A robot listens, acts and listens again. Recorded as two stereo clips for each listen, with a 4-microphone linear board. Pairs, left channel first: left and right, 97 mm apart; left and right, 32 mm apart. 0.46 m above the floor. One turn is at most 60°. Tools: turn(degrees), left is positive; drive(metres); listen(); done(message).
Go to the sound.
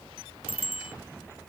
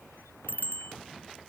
turn(degrees=60)
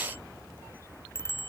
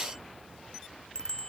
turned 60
turn(degrees=25)
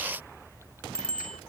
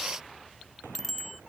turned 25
turn(degrees=10)
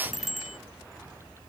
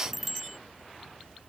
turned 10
drive(metres=1.0)
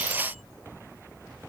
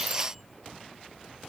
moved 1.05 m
listen()
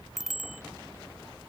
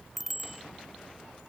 drive(metres=1.0)
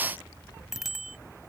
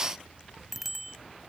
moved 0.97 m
drive(metres=1.0)
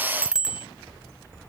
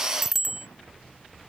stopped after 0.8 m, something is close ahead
turn(degrees=-10)
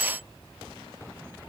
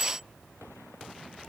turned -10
listen()
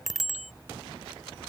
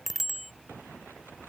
done("Arrived at the bicycle bell, straight ahead.")